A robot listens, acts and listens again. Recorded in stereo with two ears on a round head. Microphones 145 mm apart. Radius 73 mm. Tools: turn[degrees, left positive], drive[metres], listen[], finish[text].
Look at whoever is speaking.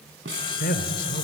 Thought: The man speaking: about 60° left or 120° left.
Action: turn[60]
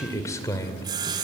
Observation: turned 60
Thought: So it is at 25° left.
Action: turn[25]
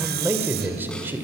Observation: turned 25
Thought: The man speaking is now 15° right.
Action: turn[-15]
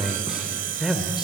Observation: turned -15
Action: finish[Found it: a man speaking, straight ahead, 2 to 4 m away.]